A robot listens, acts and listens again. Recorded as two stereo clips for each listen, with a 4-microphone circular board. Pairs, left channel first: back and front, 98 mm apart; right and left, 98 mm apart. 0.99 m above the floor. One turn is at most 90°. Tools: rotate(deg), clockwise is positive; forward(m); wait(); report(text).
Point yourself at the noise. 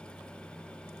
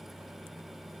wait()
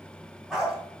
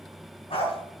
rotate(85)
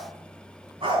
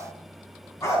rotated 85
rotate(35)
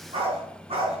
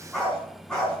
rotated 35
rotate(10)
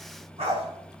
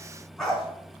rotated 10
report("Facing the dog barking, over 4 m away.")